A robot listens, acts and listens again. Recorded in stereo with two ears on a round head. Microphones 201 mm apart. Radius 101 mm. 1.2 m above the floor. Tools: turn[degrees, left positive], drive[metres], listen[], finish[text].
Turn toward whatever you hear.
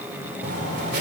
Thought: The writing: about 50° right or 130° right.
Action: turn[-50]
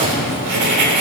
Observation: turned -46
Thought: So it is at 85° right.
Action: turn[-85]
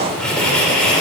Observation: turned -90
Action: finish[Found it: writing, straight ahead, 2 to 4 m away.]